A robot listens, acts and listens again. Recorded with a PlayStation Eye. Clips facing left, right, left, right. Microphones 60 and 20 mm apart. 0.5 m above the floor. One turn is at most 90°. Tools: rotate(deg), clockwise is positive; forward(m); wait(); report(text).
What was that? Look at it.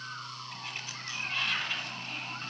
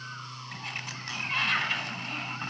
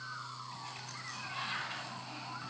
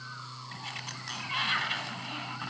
rotate(60)
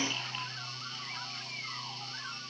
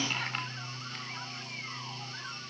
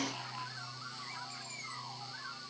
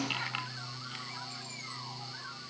wait()
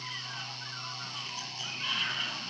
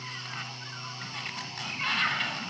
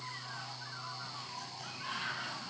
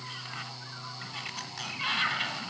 rotate(60)
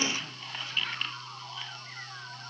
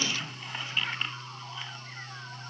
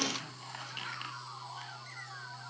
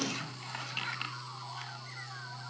rotate(15)
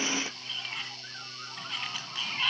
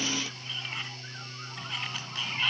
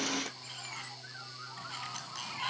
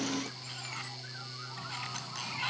report("Facing the sliding door.")